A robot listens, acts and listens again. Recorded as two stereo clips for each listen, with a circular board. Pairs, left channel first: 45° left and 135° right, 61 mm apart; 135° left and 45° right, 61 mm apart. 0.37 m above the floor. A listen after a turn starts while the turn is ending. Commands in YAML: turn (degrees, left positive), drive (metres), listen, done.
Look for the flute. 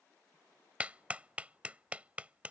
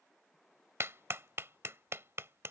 listen: true
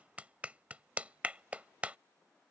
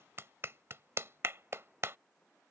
listen: true
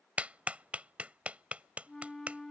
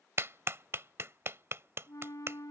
turn: 125
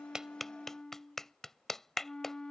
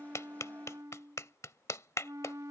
turn: -30
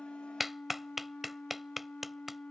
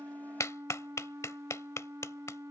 turn: -20
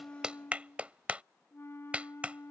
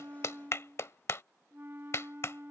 done: "Found it: a flute, straight ahead."